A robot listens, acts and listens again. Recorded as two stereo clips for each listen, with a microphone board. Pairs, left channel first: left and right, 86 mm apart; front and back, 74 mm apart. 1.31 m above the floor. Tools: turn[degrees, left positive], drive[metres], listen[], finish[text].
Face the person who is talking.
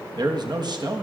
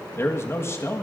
Thought: The man speaking: 55° right.
Action: turn[-55]
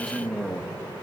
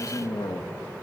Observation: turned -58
Action: finish[Found it: a man speaking, straight ahead, 1 to 2 m away.]